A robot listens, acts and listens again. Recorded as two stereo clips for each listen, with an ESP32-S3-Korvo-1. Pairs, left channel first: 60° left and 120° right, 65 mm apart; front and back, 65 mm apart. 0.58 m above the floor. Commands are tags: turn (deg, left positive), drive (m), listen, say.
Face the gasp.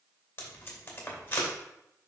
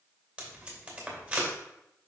<listen/>
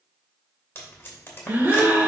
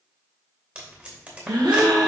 <turn deg="180"/>
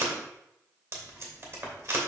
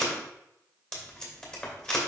<say>I heard a gasp from this way, but can't make it out now.</say>